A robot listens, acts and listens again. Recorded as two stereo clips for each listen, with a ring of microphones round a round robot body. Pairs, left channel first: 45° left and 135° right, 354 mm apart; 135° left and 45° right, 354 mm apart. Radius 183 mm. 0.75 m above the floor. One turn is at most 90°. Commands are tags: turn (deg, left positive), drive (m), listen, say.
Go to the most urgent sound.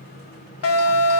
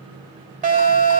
<turn deg="20"/>
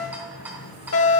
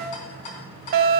<drive m="1.0"/>
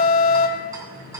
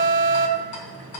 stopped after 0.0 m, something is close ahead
<turn deg="10"/>
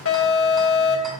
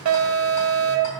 <say>Something is in my way. I am facing the alarm but have not reached it.</say>